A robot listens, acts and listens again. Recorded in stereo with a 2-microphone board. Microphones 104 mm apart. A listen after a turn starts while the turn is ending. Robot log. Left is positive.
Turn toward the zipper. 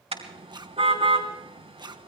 note: The zipper: about 45° right or 135° right.
cmd yaw -45
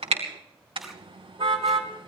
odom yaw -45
cmd idle
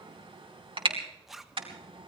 end: Facing the zipper.